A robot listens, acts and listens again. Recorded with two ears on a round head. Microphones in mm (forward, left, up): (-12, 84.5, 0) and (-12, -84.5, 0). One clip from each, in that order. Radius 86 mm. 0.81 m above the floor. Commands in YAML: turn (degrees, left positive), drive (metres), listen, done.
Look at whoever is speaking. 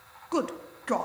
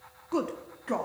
turn: 25
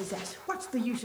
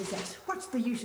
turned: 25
done: "Found it: a woman speaking, straight ahead."